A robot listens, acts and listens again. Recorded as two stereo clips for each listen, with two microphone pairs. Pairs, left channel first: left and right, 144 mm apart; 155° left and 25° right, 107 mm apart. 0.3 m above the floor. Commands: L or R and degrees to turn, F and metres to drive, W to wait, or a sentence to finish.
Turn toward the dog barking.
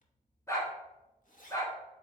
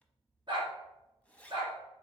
L20
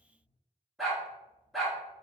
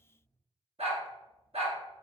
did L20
Found it: a dog barking, straight ahead.